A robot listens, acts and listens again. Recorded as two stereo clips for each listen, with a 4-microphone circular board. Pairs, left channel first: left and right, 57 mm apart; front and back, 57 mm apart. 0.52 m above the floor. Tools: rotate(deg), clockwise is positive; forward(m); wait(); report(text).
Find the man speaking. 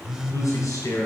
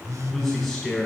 rotate(-90)
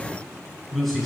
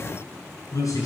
report("Facing the man speaking, 2 to 4 m away.")